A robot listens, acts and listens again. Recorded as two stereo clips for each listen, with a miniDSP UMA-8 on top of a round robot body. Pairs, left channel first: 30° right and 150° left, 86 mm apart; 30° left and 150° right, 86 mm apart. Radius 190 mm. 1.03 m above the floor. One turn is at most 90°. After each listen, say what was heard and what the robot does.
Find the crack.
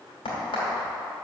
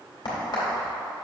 The crack: 10° right. Turn 10° right.
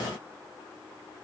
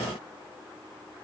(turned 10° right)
Facing where the crack came from. I can't hear it now.